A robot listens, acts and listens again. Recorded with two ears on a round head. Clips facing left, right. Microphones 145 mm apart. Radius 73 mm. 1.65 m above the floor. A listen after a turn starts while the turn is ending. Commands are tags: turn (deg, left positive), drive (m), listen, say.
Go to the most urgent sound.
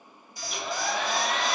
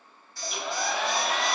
<turn deg="30"/>
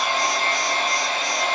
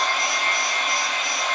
<listen/>
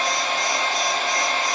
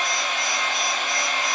<listen/>
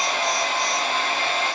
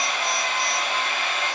<say>I heard an alarm, but can't make it out now. It was about 20° right or 140° left. I did not reach it.</say>